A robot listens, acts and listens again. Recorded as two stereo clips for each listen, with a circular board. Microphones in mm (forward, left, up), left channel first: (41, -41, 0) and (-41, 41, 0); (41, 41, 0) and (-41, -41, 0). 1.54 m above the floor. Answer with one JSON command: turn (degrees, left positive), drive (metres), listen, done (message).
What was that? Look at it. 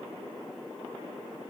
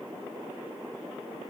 {"listen": true}
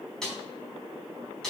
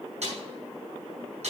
{"turn": -130}
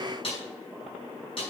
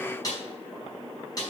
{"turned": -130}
{"turn": -10}
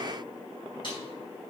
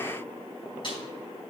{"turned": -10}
{"done": "Found it: a snare drum, straight ahead, over 4 m away."}